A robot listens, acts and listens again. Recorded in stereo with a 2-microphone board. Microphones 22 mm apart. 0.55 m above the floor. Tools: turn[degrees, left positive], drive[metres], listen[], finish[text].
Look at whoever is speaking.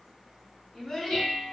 Thought: The child speaking: about 30° left or 150° left.
Action: turn[30]
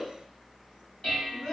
Thought: So it is at 110° left.
Action: turn[110]
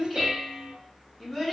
Thought: The child speaking is now 30° left.
Action: turn[30]
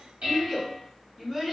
Action: finish[Found it: a child speaking, straight ahead.]